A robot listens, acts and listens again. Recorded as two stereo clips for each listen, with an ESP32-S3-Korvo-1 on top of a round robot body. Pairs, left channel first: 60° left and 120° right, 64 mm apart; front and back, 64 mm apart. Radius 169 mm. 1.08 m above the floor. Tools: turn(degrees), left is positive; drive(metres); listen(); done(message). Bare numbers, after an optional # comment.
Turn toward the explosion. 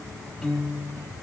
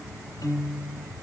listen()
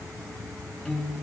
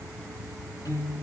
listen()
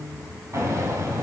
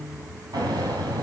# The explosion: 160° right.
turn(-160)
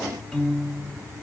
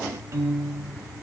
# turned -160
done("I heard an explosion from this way, but can't make it out now.")